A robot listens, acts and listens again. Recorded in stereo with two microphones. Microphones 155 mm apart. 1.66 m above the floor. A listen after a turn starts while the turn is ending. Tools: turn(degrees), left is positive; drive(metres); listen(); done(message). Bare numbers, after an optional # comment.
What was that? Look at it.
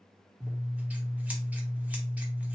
turn(-30)
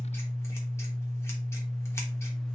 # So it is at 20° left.
turn(20)
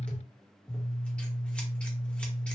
# The scissors is now 10° left.
turn(10)
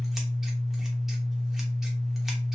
done("Found it: scissors, straight ahead, under 1 m away.")